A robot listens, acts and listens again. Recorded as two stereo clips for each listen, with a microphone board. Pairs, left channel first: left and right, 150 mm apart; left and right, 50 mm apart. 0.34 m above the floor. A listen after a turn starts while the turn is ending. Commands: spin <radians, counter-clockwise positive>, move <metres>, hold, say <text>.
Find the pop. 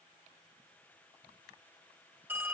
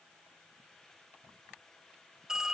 hold
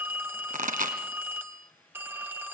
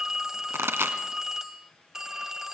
spin -1.22
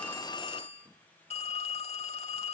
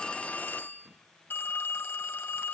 hold
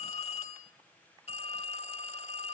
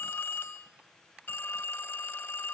say I heard a pop, but can't make it out now. It was about straight ahead or 40° right.